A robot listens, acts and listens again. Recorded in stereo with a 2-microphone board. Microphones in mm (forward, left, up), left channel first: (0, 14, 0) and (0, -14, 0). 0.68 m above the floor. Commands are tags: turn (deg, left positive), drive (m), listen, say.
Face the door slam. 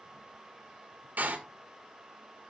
<turn deg="-75"/>
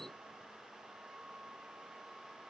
<listen/>
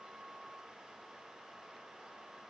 <say>I heard a door slam, but can't make it out now. It was about straight ahead or 30° right.</say>